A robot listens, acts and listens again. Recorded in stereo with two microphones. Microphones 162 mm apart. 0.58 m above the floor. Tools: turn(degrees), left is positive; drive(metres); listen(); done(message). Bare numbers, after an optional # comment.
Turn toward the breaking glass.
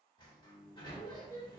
listen()
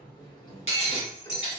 # The breaking glass: about 40° left or 140° left.
turn(40)
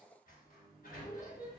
listen()
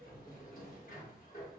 done("I heard breaking glass, but can't make it out now. It was about straight ahead or 100° left.")